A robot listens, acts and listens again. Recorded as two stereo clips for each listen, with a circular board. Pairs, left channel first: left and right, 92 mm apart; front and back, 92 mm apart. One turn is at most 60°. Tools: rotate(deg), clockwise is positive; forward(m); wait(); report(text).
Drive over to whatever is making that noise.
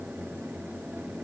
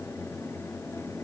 wait()
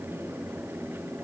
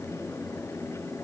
wait()
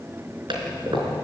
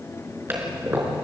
rotate(60)
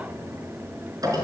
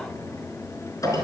rotate(45)
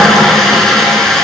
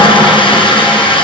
forward(1.0)
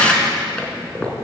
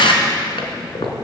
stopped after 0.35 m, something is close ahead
rotate(-15)
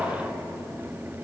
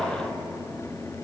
wait()
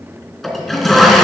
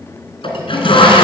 report("Something is in my way. I am facing the toilet flushing but have not reached it.")